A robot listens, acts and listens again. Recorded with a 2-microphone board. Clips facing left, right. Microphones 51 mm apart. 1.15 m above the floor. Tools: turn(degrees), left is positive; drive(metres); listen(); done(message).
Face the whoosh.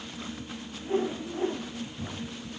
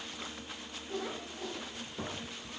turn(degrees=30)
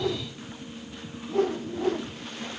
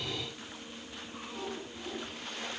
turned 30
turn(degrees=120)
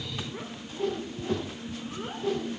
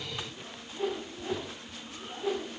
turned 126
done("Found it: a whoosh, straight ahead, under 1 m away.")